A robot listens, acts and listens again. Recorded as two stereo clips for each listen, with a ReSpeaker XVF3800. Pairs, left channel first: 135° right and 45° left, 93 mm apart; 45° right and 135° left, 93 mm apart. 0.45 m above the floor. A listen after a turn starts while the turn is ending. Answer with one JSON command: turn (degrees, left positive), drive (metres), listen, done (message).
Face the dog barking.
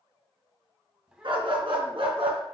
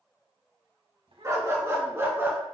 {"turn": 70}
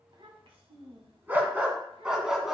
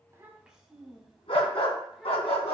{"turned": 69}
{"turn": -40}
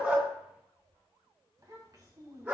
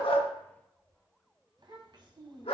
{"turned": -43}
{"turn": -25}
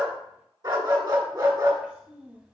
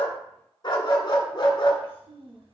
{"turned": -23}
{"done": "Found it: a dog barking, straight ahead, 1 to 2 m away."}